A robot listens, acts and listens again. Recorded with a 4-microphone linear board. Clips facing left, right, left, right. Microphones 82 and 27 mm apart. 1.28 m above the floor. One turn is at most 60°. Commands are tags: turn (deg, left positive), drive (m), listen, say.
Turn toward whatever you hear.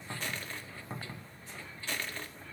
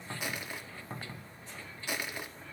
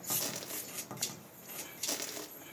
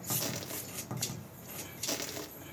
<turn deg="-30"/>
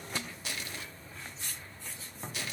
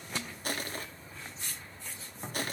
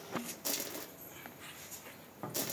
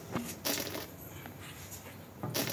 <turn deg="-60"/>
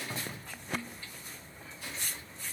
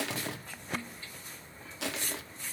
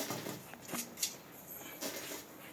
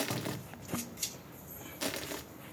<turn deg="-60"/>
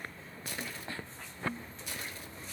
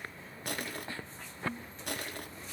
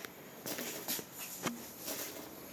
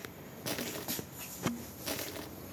<turn deg="-60"/>
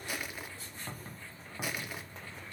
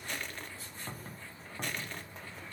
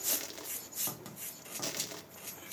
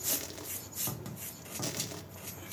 <turn deg="10"/>
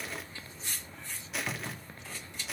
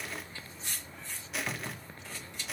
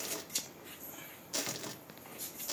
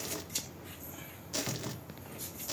<say>Facing the crushing.</say>